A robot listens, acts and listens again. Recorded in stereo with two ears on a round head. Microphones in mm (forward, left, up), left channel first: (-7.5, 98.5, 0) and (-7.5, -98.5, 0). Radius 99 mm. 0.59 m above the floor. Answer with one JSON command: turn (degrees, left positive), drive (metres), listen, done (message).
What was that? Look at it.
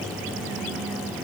{"listen": true}
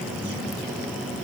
{"listen": true}
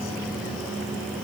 {"done": "I can't make out anything to turn to."}